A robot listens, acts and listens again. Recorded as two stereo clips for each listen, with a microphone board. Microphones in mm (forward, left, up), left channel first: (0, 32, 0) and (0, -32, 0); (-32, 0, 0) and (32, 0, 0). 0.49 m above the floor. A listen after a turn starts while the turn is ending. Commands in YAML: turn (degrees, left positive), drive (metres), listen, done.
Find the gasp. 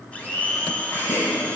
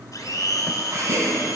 turn: 40
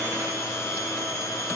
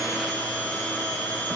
done: "I heard a gasp from this way, but can't make it out now."